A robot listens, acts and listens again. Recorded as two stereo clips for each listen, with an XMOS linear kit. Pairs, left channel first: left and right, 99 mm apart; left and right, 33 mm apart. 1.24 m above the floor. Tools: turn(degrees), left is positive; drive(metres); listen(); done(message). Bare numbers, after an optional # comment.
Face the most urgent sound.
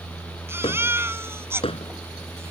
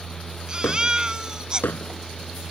# The baby crying: about 25° right or 155° right.
turn(-25)
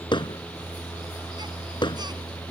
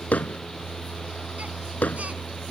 listen()
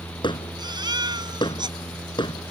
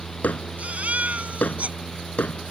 # So it is at 130° right.
turn(-130)
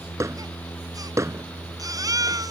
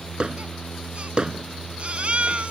# The baby crying is now 40° right.
turn(-40)
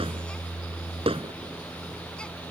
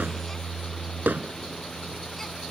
listen()
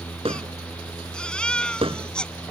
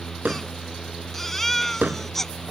# The baby crying is now 10° left.
turn(10)
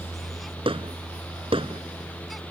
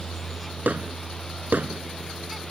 listen()
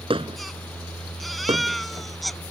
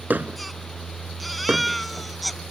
done("Facing the baby crying.")